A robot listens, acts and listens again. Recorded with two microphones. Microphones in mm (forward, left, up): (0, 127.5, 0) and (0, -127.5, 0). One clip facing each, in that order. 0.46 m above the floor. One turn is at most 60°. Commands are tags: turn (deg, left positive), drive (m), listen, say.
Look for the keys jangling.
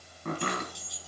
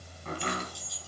<turn deg="20"/>
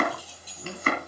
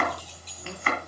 <turn deg="30"/>
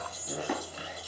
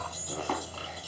<turn deg="-15"/>
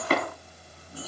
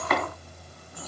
<listen/>
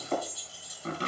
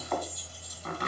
<turn deg="10"/>
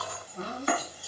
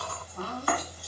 <say>Found it: keys jangling, straight ahead, over 4 m away.</say>